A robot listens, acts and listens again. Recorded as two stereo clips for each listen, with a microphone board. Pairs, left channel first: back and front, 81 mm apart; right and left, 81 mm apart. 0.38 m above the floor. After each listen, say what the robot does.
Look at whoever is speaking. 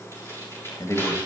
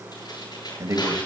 Turn 130° left.
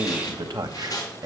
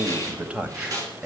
Turn 10° left.
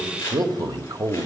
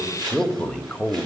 Turn 20° right.
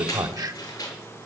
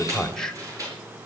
Turn 10° right.
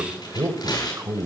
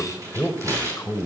Turn 40° right.
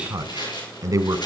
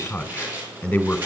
Turn 20° right.
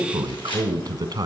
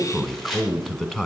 Found it: a man speaking, straight ahead.